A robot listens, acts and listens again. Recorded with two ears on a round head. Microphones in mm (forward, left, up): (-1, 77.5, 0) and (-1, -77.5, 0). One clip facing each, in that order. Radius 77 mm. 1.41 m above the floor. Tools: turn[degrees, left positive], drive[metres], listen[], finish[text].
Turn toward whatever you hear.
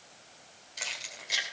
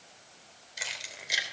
Action: turn[-30]
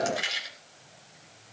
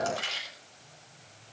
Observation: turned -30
Thought: So it is at 15° left.
Action: turn[15]
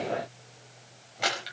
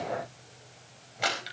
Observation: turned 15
Action: finish[Facing the keys jangling, over 4 m away.]